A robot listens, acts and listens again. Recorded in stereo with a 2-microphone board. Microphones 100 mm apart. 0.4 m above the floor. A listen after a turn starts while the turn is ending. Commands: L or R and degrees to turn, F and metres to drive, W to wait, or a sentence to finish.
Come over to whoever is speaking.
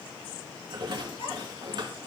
L70
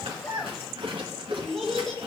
F1.0
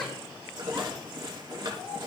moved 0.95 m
L10
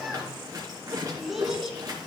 F1.0
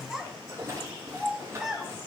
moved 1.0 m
F1.0
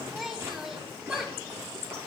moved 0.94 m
F1.0
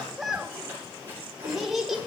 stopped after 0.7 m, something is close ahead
Arrived at the child speaking, straight ahead.